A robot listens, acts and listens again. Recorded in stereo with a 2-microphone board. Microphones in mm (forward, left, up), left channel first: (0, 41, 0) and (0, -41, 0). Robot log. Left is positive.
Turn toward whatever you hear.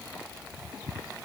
cmd idle
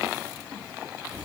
cmd idle
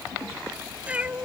note: The cat meowing: about 20° right or 160° right.
cmd yaw -20
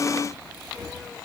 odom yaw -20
cmd idle
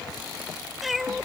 cmd yaw +30
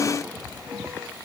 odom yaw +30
cmd idle
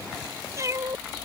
note: So it is at 35° right.
cmd yaw -35
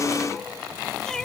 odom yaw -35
end: Facing the cat meowing.